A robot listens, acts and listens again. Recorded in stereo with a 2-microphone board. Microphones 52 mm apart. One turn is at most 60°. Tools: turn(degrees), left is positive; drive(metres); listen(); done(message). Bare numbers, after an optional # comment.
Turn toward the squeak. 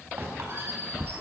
# The squeak: about 50° right or 130° right.
turn(-50)
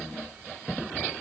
listen()
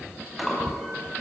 done("Found it: a squeak, straight ahead.")